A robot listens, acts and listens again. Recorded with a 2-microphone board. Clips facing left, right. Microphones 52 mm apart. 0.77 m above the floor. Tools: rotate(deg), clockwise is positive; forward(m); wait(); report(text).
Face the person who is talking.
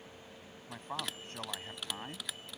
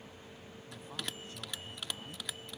rotate(-45)
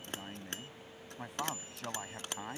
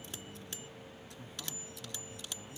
rotate(-90)
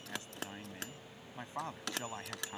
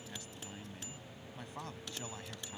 rotate(-25)
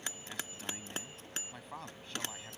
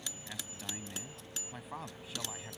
report("Found it: a man speaking, straight ahead.")